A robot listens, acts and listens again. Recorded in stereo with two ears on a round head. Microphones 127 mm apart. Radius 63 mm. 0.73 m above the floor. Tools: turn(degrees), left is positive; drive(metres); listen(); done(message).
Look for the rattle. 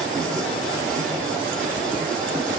listen()
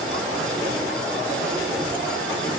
listen()
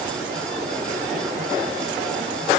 done("I can't make out a rattle.")